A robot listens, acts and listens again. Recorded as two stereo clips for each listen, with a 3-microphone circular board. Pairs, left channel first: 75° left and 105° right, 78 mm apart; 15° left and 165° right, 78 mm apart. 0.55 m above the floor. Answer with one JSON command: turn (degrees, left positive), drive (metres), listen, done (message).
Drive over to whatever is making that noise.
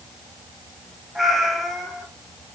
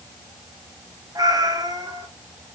{"turn": 170}
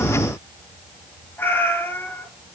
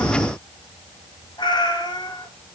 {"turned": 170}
{"turn": 15}
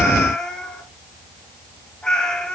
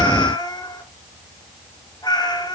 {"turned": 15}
{"drive": 1.0}
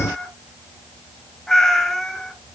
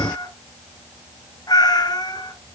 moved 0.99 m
{"turn": -10}
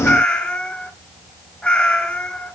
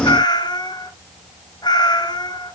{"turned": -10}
{"drive": 1.0}
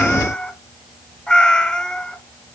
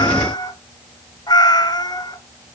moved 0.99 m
{"drive": 1.0}
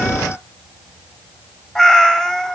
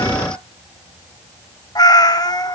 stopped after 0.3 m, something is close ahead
{"turn": -10}
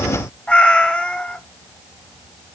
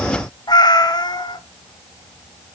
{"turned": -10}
{"done": "I am next to the cat meowing."}